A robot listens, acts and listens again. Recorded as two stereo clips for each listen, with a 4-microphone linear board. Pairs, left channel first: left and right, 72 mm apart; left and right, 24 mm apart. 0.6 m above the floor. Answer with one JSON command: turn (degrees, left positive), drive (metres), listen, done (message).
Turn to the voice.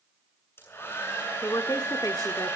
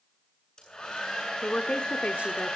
{"turn": 60}
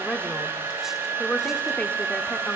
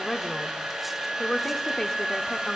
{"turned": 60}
{"turn": 25}
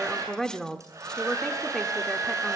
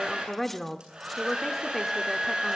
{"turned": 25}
{"turn": 10}
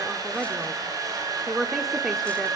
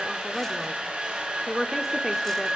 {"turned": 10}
{"done": "Found it: a woman speaking, straight ahead."}